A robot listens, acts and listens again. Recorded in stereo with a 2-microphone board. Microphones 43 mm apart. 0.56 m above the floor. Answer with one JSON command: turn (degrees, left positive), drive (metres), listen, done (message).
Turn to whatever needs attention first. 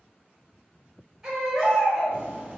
{"turn": -15}
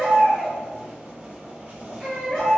{"done": "Found it: a baby crying, straight ahead, 1 to 2 m away."}